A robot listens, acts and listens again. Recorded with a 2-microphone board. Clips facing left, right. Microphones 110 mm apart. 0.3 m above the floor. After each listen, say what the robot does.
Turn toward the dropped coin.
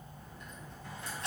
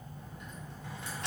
Turn 90° right.
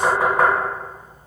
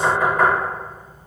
Facing where the dropped coin came from. I can't hear it now.